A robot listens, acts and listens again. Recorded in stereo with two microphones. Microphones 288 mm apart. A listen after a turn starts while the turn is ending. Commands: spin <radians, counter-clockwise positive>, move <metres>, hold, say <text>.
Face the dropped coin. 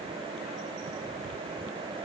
hold
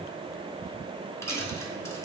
spin 0.52
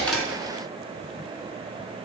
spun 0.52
hold
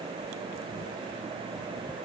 say I heard a dropped coin, but can't make it out now. It was about 20° right or 140° left.